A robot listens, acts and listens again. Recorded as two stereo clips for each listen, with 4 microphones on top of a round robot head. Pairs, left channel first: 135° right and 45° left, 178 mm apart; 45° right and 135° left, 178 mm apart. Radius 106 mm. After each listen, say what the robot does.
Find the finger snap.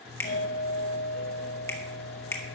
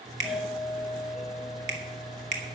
Turn 150° left.
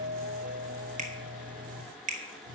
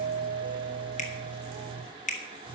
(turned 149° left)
Facing the finger snap.